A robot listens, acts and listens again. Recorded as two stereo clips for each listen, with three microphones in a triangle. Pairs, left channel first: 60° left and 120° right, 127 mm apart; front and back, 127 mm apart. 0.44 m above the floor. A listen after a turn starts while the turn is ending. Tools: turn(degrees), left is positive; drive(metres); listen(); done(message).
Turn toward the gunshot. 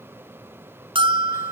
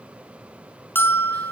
listen()
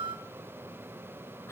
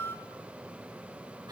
listen()
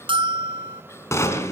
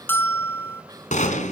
turn(degrees=-10)
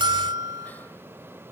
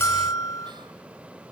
done("Facing where the gunshot came from. I can't hear it now.")